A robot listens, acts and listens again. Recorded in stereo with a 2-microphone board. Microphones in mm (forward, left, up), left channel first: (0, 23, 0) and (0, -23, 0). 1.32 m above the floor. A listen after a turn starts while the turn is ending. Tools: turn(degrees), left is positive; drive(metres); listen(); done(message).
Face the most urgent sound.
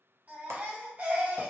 turn(degrees=-35)
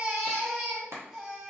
done("Facing the baby crying, 1 to 2 m away.")